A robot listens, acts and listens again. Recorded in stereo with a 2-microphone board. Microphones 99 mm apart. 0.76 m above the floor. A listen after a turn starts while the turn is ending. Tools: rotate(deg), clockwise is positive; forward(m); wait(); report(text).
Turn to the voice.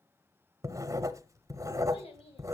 rotate(-90)
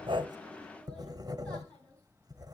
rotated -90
wait()
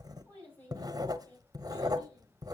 rotate(-20)
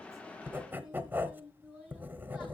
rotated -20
report("Found it: a child speaking, straight ahead, over 4 m away.")